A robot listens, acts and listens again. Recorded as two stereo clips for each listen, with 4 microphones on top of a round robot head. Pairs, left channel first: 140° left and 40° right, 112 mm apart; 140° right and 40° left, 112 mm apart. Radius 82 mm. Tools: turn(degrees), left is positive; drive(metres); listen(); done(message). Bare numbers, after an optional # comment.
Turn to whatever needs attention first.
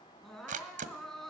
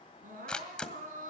# The crying: 50° left.
turn(50)
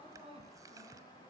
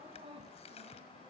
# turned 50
done("Facing the crying.")